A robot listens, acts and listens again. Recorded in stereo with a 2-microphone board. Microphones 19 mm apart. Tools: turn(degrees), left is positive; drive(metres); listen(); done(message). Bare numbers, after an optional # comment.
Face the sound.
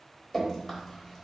turn(30)
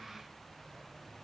listen()
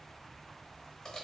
# So it is at 145° left.
turn(145)
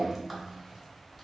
# The dripping is now 10° left.
turn(10)
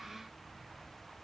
listen()
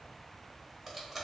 done("Found it: dripping, straight ahead.")